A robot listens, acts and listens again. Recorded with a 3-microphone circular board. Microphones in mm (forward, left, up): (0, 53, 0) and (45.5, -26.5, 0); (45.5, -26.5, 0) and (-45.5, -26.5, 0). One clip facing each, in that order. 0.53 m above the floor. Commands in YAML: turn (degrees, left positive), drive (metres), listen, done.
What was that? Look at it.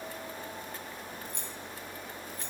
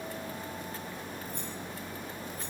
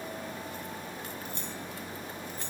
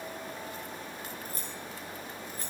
turn: 135
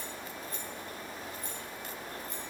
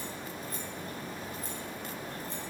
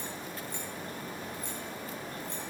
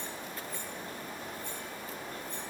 done: "Found it: keys jangling, straight ahead, over 4 m away."